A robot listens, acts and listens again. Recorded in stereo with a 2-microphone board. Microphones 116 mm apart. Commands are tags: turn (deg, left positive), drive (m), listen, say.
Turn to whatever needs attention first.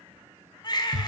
<turn deg="40"/>
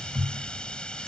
<listen/>
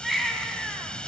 <say>Facing the baby crying.</say>